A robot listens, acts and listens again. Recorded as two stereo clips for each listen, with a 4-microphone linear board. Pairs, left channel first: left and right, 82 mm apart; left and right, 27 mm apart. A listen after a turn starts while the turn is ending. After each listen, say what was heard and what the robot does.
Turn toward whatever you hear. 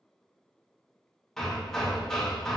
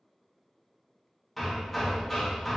Turn 30° left.
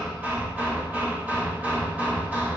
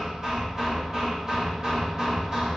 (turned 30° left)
So it is at 20° right. Turn 20° right.
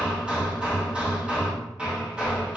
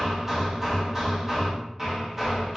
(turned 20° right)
The hammering is now 15° right. Turn 15° right.
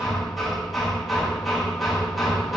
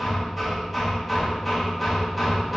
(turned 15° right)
Facing the hammering, 1 to 2 m away.